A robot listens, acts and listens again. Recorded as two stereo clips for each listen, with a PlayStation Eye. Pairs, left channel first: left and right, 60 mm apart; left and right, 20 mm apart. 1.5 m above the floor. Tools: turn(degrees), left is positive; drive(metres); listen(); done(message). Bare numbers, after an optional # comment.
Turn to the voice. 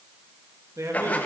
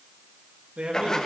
# The man speaking: about 60° right or 120° right.
turn(-60)
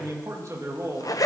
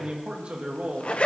# So it is at 60° right.
turn(-60)
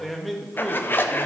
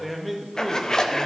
done("Facing the man speaking, 1 to 2 m away.")